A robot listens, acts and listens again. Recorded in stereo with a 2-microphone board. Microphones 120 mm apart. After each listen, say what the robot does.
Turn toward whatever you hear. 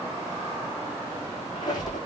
Turn 35° left.
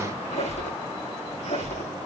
Turn 115° left.
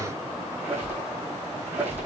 Turn 15° right.
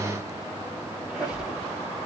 Turn 10° right.
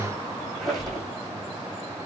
Found it: a squeak, straight ahead, over 4 m away.